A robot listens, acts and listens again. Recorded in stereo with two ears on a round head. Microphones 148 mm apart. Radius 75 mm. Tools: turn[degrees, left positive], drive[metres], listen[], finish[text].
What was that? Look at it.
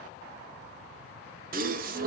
Thought: The gasp: about 55° right or 125° right.
Action: turn[-55]
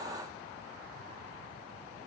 Action: listen[]
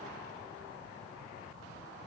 Action: finish[I heard a gasp, but can't make it out now. It was about straight ahead or 70° right.]